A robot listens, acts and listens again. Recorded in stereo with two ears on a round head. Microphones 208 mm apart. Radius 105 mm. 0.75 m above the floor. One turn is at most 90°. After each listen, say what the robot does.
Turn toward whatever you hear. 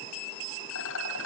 Turn 60° left.
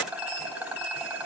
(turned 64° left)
Found it: a rattle, straight ahead, over 4 m away.